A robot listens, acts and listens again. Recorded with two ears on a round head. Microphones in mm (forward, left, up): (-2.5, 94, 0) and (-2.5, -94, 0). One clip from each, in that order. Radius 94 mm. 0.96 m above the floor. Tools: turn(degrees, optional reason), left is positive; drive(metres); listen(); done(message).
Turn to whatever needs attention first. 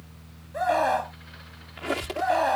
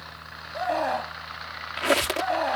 turn(degrees=30, reason="The scream: about 30° left or 150° left.")
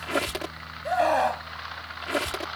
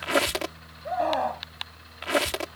turn(degrees=120, reason="So it is at 120° left.")
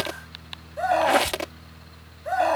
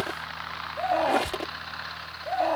turn(degrees=45, reason="The scream is now 45° left.")
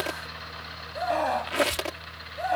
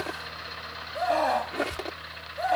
done("Found it: a scream, straight ahead.")